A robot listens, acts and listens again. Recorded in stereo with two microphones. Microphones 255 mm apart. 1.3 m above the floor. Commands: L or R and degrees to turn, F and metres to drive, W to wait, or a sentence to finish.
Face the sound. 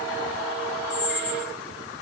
L40
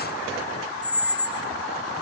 Found it: a squeak, straight ahead, 1 to 2 m away.